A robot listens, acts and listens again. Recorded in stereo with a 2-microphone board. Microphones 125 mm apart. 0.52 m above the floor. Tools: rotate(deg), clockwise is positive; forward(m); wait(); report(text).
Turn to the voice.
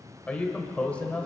rotate(-30)
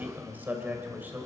rotate(15)
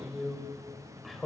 report("Facing the man speaking, 2 to 4 m away.")